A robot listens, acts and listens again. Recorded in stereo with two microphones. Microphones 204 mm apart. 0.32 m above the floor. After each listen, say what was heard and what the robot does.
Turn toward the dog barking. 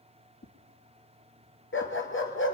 The dog barking: about 70° left or 110° left. Turn 70° left.
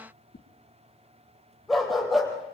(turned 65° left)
Facing the dog barking, over 4 m away.